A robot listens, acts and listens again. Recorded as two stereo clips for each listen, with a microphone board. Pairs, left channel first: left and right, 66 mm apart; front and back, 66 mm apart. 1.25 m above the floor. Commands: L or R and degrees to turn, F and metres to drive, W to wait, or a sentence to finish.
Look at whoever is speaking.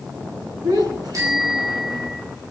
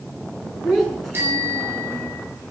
R85
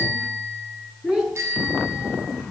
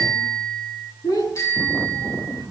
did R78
Found it: a child speaking, straight ahead, over 4 m away.